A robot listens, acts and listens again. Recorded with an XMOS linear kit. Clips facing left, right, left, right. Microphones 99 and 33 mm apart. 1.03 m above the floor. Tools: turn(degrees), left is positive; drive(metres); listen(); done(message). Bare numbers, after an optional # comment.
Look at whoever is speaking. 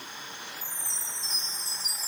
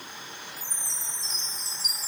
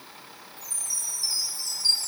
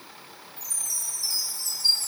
listen()
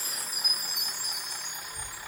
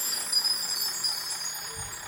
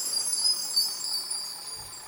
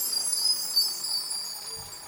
# The child speaking: about 50° right or 130° right.
turn(-50)
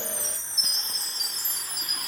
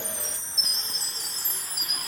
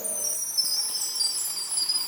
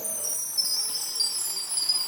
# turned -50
# So it is at 75° right.
turn(-75)
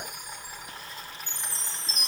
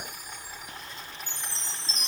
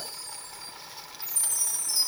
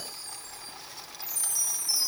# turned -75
done("Found it: a child speaking, straight ahead, over 4 m away.")